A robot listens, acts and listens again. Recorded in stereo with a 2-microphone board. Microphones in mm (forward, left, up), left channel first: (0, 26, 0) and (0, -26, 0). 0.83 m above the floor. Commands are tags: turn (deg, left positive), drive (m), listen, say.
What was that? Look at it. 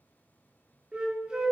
<turn deg="-15"/>
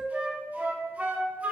<turn deg="-150"/>
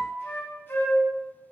<turn deg="45"/>
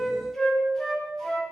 <say>Found it: a flute, straight ahead.</say>